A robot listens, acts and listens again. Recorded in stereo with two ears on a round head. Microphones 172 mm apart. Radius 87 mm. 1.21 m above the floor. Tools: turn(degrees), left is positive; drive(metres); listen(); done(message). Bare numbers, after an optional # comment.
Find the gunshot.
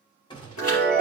# The gunshot: about 25° left or 155° left.
turn(25)
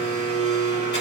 listen()
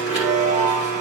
done("I heard a gunshot, but can't make it out now. It was about straight ahead or 130° left.")